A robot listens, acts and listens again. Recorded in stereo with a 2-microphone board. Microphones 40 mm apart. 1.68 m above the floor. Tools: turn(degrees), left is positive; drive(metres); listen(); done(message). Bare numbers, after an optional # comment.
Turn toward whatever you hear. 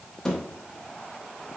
turn(30)
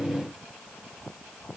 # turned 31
listen()
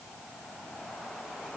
done("I heard a thud, but can't make it out now. It was about 20° right or 135° left.")